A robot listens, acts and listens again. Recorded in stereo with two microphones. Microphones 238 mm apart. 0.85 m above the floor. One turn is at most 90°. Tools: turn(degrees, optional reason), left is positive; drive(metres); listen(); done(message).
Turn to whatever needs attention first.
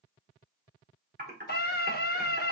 turn(degrees=45, reason="The scream: about 45° left or 135° left.")
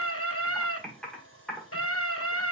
turn(degrees=90, reason="So it is at 90° left.")
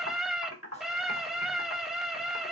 done("Found it: a scream, straight ahead, under 1 m away.")